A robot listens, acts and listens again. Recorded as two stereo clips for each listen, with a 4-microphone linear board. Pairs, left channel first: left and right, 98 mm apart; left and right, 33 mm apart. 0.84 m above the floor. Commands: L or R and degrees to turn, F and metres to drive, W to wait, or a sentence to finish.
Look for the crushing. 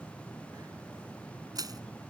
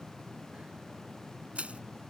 R45
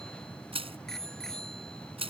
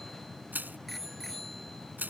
R90
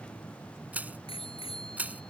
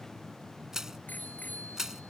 R15
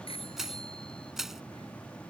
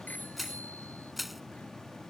Found it: crushing, straight ahead.